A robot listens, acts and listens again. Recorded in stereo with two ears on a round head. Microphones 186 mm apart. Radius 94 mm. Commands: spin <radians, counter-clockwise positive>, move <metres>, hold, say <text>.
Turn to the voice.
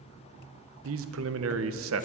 spin -1.13
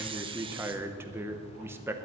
spin -0.17
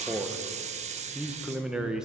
say Found it: a man speaking, straight ahead, under 1 m away.